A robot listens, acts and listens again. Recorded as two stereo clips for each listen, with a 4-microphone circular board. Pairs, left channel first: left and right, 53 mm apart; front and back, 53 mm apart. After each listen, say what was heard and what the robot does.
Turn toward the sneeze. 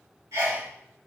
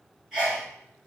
The sneeze: 100° right. Turn 100° right.
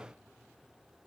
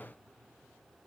I heard a sneeze from this way, but can't make it out now.